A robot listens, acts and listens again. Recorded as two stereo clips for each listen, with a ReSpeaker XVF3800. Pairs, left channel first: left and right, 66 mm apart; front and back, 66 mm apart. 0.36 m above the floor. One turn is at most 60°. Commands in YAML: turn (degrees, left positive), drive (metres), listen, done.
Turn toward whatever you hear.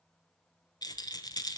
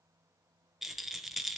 turn: 60
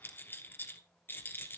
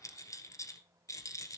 turn: 35
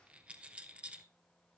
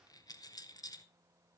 turn: -15
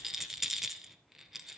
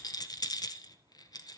done: "Facing the rattle, 1 to 2 m away."